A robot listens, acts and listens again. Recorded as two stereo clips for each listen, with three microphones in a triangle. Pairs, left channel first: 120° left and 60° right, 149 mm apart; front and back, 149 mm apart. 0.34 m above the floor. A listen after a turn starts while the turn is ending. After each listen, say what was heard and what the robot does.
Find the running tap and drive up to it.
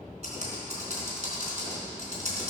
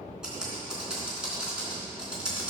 Keep listening.
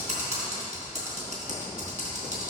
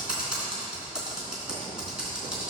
Keep listening.
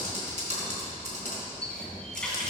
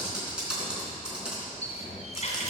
The running tap: 35° left. Turn 35° left.
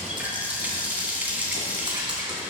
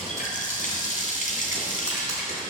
The running tap is now 20° left. Turn 20° left.
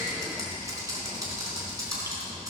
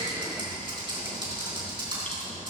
Keep listening.
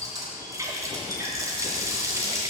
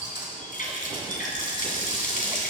Drive 1.0 m forward.
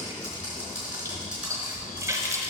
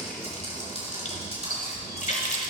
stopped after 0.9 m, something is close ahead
I am next to the running tap.